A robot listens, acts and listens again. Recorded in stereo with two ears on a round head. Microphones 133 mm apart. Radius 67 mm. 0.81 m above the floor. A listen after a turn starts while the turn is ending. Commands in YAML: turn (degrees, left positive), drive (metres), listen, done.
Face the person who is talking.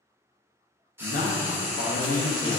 turn: 55
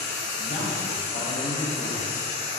listen: true
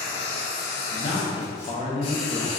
turn: 50
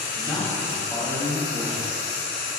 done: "Found it: a man speaking, straight ahead, under 1 m away."